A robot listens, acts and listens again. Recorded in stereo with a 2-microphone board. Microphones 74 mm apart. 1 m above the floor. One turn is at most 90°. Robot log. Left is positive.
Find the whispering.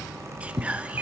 note: The whispering: about 20° right or 160° right.
cmd yaw -20
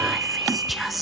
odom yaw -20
end: Found it: whispering, straight ahead, under 1 m away.